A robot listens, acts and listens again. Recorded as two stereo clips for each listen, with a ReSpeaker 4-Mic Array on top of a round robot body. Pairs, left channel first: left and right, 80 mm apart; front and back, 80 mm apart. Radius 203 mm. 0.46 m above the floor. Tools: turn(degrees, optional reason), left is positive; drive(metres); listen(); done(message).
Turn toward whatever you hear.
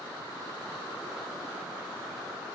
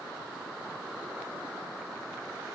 listen()
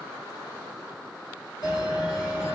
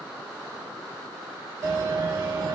turn(degrees=135, reason="The bell: 135° left.")
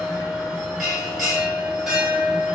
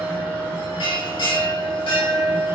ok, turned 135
done("Facing the bell.")